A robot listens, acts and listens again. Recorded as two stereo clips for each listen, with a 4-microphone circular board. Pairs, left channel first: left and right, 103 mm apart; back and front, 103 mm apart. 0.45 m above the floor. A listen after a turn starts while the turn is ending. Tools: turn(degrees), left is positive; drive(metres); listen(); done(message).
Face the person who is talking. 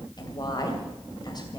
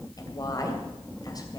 turn(degrees=130)
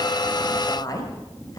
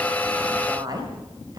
turn(degrees=45)
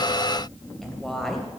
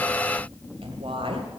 done("Facing the woman speaking.")